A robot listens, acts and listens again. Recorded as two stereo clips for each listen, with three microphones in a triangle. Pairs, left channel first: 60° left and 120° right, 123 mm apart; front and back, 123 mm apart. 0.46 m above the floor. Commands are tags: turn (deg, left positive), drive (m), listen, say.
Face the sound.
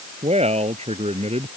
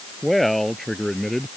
<turn deg="-85"/>
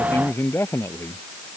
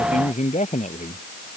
<turn deg="-10"/>
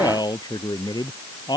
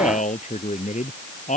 <say>Found it: a man speaking, straight ahead.</say>